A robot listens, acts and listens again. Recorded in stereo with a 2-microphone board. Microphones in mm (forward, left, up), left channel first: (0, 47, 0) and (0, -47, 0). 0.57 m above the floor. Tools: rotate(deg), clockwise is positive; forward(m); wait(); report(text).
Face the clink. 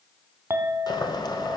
rotate(25)
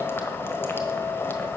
wait()
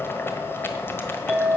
report("Found it: a clink, straight ahead.")